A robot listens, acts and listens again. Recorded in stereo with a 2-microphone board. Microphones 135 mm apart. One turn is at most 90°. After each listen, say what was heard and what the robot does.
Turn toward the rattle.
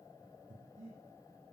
Keep listening.
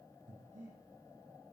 Keep listening.
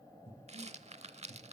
The rattle: about 50° right or 130° right. Turn 50° right.
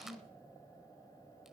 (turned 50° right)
Keep listening.
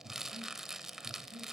Found it: a rattle, straight ahead, under 1 m away.